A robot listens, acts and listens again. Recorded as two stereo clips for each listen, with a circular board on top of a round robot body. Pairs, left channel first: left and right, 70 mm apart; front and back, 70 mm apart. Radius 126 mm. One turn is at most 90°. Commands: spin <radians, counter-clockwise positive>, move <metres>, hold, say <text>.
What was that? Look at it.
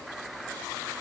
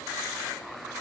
hold
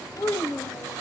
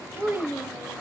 spin 1.57
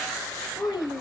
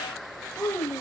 spin 1.22
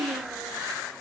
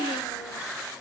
hold
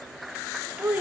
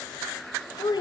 spin -0.26
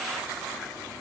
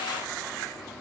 hold
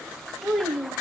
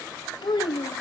say Found it: a child speaking, straight ahead.